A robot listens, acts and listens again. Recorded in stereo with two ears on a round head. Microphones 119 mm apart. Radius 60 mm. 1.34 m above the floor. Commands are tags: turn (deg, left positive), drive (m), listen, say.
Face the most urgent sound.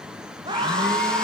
<turn deg="-30"/>
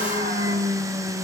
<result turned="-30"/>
<listen/>
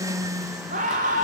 <turn deg="-120"/>
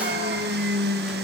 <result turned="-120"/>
<listen/>
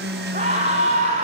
<turn deg="-45"/>
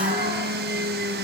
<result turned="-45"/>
<listen/>
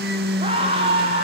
<turn deg="-40"/>
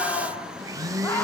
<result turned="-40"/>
<turn deg="15"/>
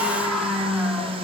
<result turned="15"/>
<say>Facing the scream.</say>